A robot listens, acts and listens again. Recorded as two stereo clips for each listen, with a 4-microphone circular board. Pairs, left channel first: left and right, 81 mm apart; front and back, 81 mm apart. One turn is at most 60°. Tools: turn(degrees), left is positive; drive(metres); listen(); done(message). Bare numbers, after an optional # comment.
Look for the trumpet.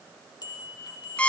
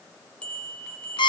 listen()
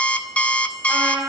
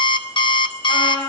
# The trumpet: 20° right.
turn(-20)
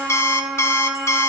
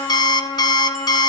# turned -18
done("Facing the trumpet, 2 to 4 m away.")